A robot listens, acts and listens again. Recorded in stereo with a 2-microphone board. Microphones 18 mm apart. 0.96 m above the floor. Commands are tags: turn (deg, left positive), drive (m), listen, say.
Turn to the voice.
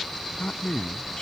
<turn deg="90"/>
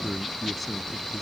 <turn deg="10"/>
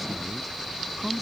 <listen/>
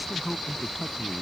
<say>Facing the man speaking.</say>